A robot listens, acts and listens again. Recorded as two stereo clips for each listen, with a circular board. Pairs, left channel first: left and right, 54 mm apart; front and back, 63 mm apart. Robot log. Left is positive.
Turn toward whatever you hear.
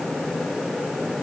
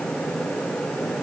cmd idle
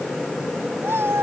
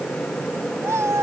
note: The cat meowing: 135° right.
cmd yaw -135
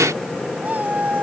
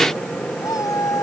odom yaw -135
note: The cat meowing is now 30° right.
cmd yaw -30
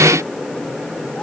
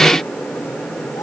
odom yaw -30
cmd idle
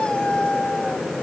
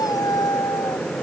note: The cat meowing is now 15° left.
cmd yaw +15
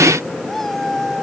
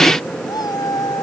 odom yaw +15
end: Found it: a cat meowing, straight ahead.